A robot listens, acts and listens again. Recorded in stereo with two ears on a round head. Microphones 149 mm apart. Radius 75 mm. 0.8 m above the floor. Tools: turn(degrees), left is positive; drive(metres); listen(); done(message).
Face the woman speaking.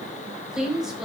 turn(degrees=-30)
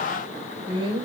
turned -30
turn(degrees=-145)
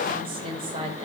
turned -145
turn(degrees=-35)
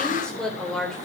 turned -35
done("Found it: a woman speaking, straight ahead.")